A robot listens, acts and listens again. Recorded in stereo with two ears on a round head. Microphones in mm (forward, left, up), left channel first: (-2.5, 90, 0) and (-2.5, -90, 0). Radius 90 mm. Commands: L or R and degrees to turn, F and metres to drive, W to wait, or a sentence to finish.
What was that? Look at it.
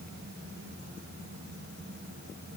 W
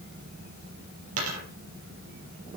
R90
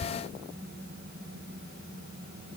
I heard a dropped coin from this way, but can't make it out now.